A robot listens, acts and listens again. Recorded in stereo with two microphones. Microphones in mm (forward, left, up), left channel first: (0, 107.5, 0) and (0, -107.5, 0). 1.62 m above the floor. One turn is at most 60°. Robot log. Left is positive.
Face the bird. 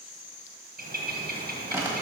note: The bird: about 45° right or 135° right.
cmd yaw -45
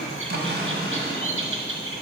note: So it is at 85° right.
cmd yaw -60
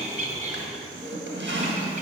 note: The bird is now 35° right.
cmd yaw -35
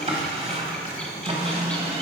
end: Facing the bird.